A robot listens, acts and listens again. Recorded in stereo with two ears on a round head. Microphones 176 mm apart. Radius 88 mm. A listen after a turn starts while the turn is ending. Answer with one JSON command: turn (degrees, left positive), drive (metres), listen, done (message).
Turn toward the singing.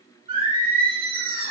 {"turn": -30}
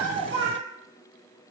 {"turn": -115}
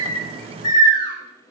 {"turn": 20}
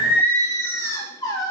{"turn": 20}
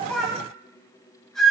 {"done": "Facing the singing."}